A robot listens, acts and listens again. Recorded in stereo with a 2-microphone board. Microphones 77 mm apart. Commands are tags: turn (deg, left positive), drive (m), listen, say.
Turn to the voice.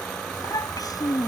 <turn deg="60"/>
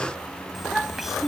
<say>Facing the child speaking.</say>